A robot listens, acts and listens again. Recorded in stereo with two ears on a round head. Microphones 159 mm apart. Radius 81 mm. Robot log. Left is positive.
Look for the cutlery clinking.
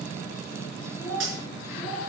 cmd yaw -90
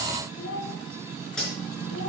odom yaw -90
end: Found it: cutlery clinking, straight ahead.